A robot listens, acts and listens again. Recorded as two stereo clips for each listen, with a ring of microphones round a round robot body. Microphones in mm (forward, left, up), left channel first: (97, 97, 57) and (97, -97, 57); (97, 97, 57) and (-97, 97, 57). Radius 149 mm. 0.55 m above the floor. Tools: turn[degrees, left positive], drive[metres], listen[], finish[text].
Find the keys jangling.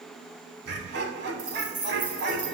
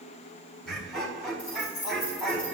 Thought: The keys jangling: 45° right.
Action: turn[-45]
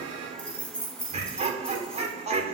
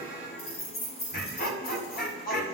Action: finish[Facing the keys jangling, over 4 m away.]